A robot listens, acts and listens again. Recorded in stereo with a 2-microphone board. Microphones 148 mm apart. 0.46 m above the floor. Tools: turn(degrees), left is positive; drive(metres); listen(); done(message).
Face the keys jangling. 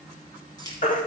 turn(degrees=25)
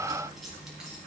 done("Facing the keys jangling, 2 to 4 m away.")